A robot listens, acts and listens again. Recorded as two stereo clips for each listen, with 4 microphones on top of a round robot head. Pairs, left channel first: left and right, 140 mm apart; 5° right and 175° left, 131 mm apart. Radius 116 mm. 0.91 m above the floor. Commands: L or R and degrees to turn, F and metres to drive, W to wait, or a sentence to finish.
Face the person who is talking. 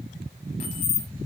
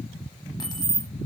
W
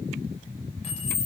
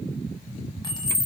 W
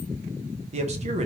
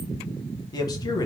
R60
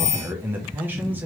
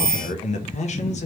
R15
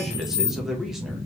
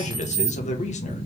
Found it: a man speaking, straight ahead, under 1 m away.